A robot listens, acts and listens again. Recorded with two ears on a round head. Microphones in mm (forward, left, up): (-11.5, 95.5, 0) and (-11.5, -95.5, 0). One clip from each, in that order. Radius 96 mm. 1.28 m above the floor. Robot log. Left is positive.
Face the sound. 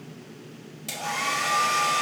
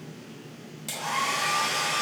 cmd yaw -30
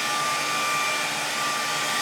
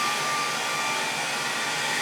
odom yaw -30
note: So it is at 25° left.
cmd yaw +25
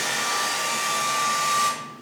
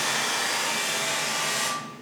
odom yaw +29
end: Facing the hair dryer.